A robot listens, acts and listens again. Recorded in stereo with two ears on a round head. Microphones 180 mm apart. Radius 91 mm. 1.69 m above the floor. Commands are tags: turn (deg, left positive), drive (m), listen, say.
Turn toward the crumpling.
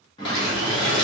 <turn deg="70"/>
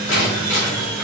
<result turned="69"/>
<turn deg="35"/>
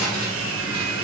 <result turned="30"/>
<listen/>
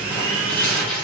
<turn deg="10"/>
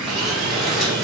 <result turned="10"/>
<say>Facing the crumpling, 1 to 2 m away.</say>